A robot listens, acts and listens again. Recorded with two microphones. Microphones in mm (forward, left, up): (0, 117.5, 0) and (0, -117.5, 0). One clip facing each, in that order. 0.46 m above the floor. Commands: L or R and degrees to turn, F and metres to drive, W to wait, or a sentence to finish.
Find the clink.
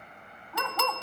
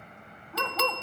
L55
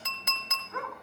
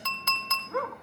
L20
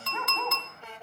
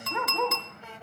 Found it: a clink, straight ahead.